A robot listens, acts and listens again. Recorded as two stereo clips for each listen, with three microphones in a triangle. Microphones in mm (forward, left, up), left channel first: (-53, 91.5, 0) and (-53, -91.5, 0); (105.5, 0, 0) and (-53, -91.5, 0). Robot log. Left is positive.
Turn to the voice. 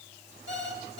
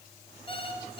cmd idle
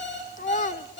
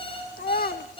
note: The child speaking: 55° left.
cmd yaw +55
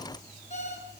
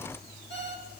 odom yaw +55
cmd idle
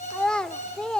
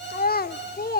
end: Found it: a child speaking, straight ahead.